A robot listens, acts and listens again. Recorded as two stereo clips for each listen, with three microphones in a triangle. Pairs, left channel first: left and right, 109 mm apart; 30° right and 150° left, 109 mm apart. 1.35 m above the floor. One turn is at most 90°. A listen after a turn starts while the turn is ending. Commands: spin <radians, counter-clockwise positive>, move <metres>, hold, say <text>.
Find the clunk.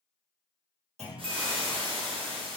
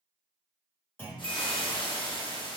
spin -1.57
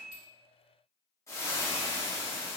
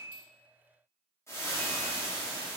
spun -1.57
spin -0.17
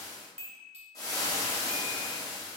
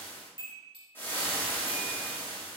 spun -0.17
say Facing where the clunk came from. I can't hear it now.